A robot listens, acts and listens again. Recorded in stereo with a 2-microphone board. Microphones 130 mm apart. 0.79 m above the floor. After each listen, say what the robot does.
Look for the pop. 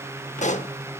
Turn 65° left.
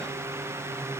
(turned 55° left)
Keep listening.
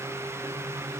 I heard a pop, but can't make it out now. It was about 10° left or 60° left.